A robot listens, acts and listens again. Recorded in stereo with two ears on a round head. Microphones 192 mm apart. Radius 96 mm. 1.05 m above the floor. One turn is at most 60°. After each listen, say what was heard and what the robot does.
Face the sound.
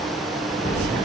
Turn 30° left.
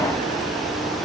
Keep listening.
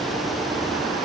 I heard an explosion, but can't make it out now. It was about 15° right or 135° left.